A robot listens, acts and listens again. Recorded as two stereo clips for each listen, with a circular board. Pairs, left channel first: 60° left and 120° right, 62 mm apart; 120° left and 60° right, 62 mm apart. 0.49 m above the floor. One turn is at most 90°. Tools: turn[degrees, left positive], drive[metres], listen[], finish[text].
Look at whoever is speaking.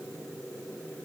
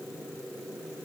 Action: listen[]
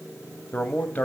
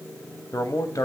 Thought: The man speaking: 120° left.
Action: turn[90]
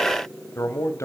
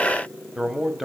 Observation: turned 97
Thought: The man speaking is now 25° left.
Action: turn[25]
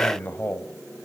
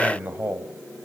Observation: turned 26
Action: finish[Found it: a man speaking, straight ahead.]